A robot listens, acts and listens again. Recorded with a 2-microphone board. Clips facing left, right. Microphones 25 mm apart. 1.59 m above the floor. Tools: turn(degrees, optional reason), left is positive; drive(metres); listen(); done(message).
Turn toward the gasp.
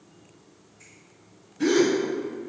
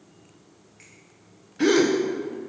turn(degrees=-65, reason="The gasp: about 65° right or 115° right.")
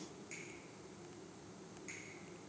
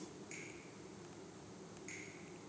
listen()
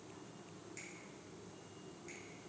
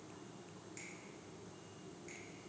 done("I heard a gasp, but can't make it out now. It was about straight ahead or 50° right.")